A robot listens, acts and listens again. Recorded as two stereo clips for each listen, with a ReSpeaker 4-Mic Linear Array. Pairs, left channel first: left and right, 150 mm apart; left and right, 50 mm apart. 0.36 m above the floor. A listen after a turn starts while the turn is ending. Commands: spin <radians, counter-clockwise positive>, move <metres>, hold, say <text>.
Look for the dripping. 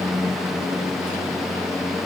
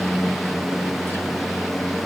hold
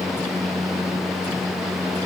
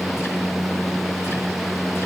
hold
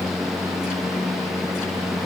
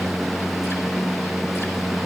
say I can't make out dripping to turn to.